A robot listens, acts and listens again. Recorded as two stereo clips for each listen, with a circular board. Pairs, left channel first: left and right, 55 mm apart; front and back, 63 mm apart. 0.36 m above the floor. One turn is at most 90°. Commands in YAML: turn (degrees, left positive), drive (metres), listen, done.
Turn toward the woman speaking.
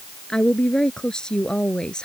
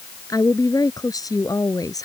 turn: 15
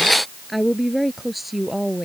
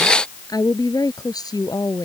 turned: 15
done: "Facing the woman speaking."